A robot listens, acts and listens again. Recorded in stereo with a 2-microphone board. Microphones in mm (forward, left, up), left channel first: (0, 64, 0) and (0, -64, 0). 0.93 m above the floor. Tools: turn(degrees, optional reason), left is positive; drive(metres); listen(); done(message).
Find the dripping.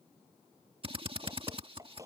turn(degrees=-25, reason="The dripping: about 25° right or 155° right.")
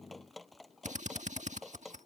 done("Found it: dripping, straight ahead.")